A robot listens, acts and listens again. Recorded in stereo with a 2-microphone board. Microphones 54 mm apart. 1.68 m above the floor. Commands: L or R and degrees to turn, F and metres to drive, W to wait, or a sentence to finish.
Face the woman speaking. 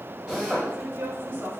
R45
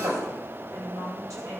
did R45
R90
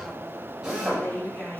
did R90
L15
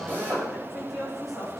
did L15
Found it: a woman speaking, straight ahead, over 4 m away.